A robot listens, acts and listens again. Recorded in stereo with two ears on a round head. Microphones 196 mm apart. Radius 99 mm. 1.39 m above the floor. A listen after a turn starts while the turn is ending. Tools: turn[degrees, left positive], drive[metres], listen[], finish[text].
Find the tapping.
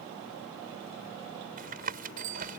Thought: The tapping: about 45° right or 135° right.
Action: turn[-45]
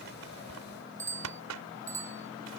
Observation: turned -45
Thought: So it is at 90° right.
Action: turn[-90]
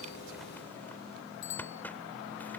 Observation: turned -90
Action: listen[]
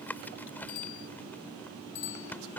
Thought: The tapping is now 10° left.
Action: turn[10]
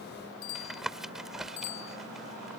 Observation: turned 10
Action: finish[Found it: tapping, straight ahead.]